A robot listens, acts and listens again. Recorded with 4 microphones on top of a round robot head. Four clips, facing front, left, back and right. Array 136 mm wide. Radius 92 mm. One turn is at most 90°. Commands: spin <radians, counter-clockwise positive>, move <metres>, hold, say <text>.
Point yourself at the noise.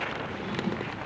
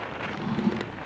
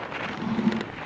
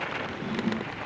spin 1.57
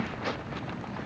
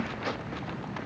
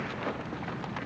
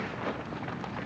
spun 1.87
spin 0.61
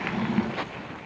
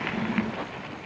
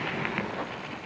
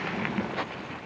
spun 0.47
spin 0.17
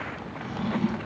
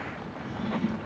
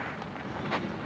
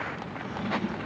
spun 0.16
say Found it: a drawer, straight ahead, 2 to 4 m away.